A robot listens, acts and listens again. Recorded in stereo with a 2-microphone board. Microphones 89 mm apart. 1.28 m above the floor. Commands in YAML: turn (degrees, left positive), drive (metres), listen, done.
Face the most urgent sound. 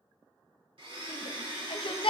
turn: 60
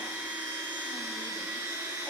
listen: true
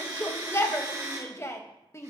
turn: 35
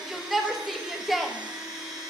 done: "Facing the shout, under 1 m away."